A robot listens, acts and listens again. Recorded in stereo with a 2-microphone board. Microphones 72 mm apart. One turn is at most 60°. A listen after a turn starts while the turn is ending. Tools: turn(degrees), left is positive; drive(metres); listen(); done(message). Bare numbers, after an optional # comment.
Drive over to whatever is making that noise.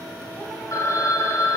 # The phone ringing: about 50° left or 130° left.
turn(50)
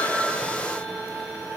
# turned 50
listen()
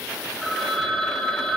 drive(1.0)
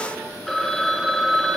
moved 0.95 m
drive(1.0)
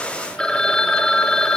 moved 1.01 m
# The phone ringing is now 15° left.
turn(15)
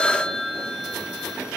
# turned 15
drive(1.0)
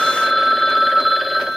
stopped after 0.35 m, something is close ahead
done("I am next to the phone ringing.")